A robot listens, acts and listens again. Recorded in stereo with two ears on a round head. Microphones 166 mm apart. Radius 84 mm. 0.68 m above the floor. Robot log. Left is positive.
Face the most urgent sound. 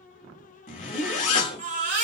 note: The baby crying: about 45° right or 135° right.
cmd yaw -45
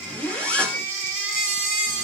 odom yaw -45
note: So it is at 85° right.
cmd yaw -85
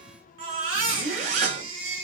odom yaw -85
note: The baby crying is now 30° right.
cmd yaw -30
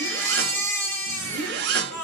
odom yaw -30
note: The baby crying is now 10° left.
cmd yaw +10
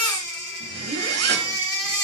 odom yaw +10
end: Found it: a baby crying, straight ahead.